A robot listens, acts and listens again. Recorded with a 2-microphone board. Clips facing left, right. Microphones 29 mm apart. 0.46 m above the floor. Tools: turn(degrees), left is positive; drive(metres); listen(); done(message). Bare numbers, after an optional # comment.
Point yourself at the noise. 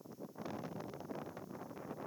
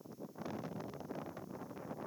listen()
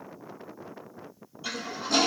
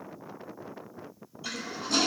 turn(30)
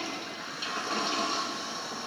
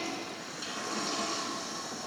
# So it is at 145° left.
turn(145)
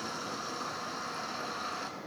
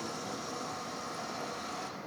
# The toilet flushing is now 40° left.
turn(40)
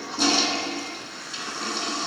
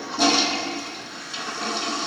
done("Facing the toilet flushing, under 1 m away.")